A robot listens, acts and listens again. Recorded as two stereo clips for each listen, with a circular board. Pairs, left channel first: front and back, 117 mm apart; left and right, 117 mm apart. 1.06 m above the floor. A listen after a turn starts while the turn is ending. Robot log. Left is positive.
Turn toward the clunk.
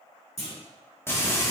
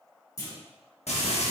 note: The clunk: 30° left.
cmd yaw +30
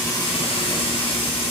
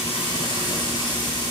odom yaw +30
end: I heard a clunk from this way, but can't make it out now.